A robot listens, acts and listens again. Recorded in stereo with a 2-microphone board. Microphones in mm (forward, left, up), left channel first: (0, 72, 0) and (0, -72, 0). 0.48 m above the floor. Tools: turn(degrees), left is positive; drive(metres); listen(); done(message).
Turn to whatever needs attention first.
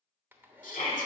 turn(degrees=65)
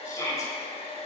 turn(degrees=25)
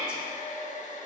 done("Found it: a shout, straight ahead, 1 to 2 m away.")